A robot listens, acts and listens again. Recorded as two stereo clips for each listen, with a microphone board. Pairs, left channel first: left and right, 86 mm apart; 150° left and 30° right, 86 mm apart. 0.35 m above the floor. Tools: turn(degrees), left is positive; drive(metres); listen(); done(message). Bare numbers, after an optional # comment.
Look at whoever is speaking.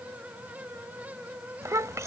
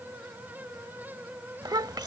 # The child speaking: 45° right.
turn(-45)
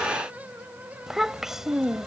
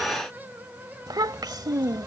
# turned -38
done("Facing the child speaking.")